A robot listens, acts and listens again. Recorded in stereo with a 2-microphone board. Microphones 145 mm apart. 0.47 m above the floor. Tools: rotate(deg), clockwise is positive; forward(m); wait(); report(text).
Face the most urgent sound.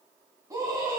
rotate(20)
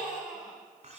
report("Facing the scream, 2 to 4 m away.")